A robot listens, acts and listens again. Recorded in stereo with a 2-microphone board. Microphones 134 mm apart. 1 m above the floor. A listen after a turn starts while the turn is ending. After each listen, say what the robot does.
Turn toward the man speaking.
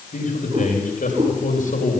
Turn 90° left.
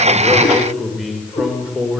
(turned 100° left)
Found it: a man speaking, straight ahead, 2 to 4 m away.